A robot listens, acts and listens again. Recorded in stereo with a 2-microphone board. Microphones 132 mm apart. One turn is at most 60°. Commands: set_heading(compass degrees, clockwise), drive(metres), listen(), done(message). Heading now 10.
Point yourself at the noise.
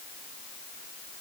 listen()
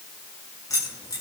set_heading(345)
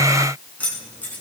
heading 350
set_heading(320)
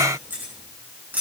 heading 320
set_heading(335)
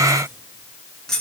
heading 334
done("Facing the keys jangling, over 4 m away.")